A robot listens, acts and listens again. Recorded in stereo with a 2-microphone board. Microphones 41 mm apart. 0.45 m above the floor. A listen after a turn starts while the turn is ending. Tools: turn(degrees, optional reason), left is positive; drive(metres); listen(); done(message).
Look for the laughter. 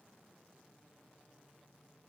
listen()
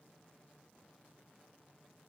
listen()
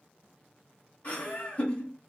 turn(degrees=40, reason="The laughter: about 40° left or 140° left.")
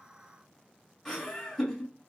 turn(degrees=10, reason="So it is at 10° left.")
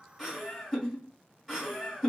done("Facing the laughter, 1 to 2 m away.")